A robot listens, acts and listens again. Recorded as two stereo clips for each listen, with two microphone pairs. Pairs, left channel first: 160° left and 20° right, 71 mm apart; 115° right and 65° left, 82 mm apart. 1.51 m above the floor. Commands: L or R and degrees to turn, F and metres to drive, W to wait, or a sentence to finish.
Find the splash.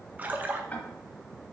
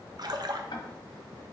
L45
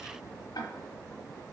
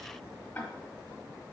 I heard a splash from this way, but can't make it out now.